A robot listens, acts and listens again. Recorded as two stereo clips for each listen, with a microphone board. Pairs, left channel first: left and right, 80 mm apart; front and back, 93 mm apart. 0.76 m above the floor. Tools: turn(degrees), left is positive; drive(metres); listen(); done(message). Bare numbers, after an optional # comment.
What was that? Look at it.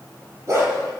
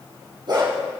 # The dog barking: 145° right.
turn(-145)
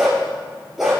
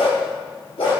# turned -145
done("Found it: a dog barking, straight ahead.")